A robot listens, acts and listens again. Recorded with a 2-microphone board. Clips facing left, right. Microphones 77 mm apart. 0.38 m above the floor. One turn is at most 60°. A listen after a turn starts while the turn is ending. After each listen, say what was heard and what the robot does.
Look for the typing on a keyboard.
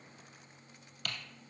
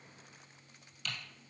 The typing on a keyboard: about 55° left or 125° left. Turn 55° left.
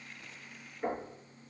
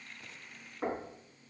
Keep listening.
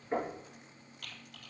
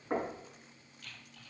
So it is at 65° left. Turn 60° left.
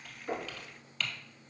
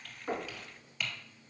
The typing on a keyboard is now 10° right. Turn 10° right.
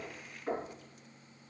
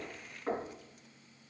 Keep listening.
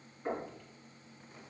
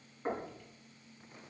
Keep listening.
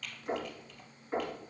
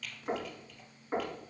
Found it: typing on a keyboard, straight ahead, 1 to 2 m away.